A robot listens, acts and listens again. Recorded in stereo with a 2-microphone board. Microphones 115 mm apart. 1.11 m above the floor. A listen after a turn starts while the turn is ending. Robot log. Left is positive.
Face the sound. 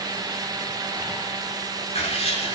cmd yaw +90
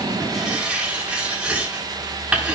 note: So it is at 10° right.
cmd yaw -10
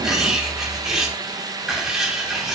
end: Facing the writing.